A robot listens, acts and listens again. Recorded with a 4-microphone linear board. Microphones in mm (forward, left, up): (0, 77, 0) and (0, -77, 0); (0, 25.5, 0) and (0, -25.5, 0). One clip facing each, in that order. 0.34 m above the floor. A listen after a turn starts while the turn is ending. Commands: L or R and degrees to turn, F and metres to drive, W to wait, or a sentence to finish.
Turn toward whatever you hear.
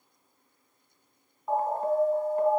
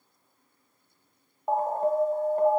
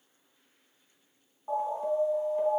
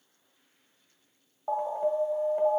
R45
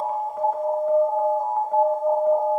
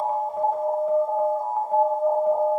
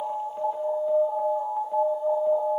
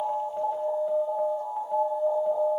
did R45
Facing the alarm, under 1 m away.